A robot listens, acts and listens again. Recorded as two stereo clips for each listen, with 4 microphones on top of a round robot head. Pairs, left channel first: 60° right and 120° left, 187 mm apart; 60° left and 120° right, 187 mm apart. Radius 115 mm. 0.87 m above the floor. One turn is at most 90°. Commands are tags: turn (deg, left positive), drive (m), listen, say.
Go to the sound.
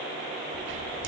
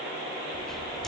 <turn deg="90"/>
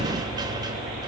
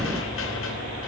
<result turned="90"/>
<turn deg="50"/>
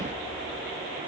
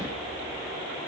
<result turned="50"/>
<turn deg="20"/>
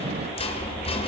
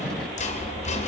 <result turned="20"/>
<drive m="1.0"/>
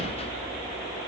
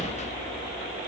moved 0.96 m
<drive m="1.0"/>
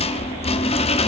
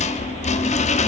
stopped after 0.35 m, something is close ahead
<say>Arrived at the rattle, straight ahead.</say>